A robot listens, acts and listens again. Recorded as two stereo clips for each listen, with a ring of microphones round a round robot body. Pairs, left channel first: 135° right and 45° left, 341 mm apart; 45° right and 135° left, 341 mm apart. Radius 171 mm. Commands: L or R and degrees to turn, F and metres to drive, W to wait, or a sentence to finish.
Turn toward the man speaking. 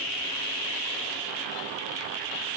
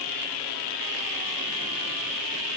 W
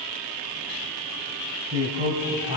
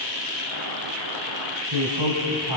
L120
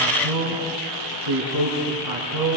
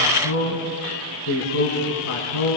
L10
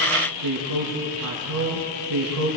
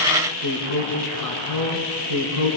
Facing the man speaking, over 4 m away.